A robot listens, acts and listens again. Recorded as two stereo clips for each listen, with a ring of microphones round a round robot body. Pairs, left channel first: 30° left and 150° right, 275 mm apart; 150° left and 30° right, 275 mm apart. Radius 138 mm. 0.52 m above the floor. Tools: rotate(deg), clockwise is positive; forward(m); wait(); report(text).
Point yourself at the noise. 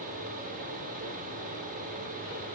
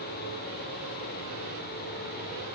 wait()
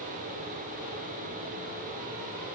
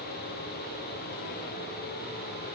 wait()
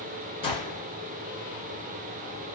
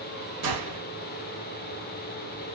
rotate(45)
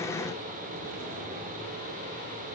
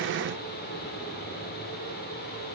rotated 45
report("Facing where the gunshot came from. I can't hear it now.")